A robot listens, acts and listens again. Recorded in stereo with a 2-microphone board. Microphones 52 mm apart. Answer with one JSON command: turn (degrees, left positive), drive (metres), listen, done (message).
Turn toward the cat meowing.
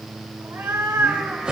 {"turn": -65}
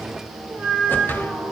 {"turn": -55}
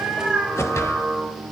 {"turn": -25}
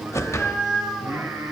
{"turn": -15}
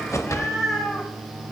{"done": "Found it: a cat meowing, straight ahead."}